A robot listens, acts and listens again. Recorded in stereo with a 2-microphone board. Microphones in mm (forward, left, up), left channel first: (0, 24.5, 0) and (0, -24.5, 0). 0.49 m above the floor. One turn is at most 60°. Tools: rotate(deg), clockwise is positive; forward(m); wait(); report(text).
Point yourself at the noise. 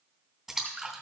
rotate(30)
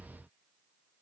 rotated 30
wait()
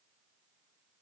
report("I heard a splash, but can't make it out now. It was about 20° left or 140° right.")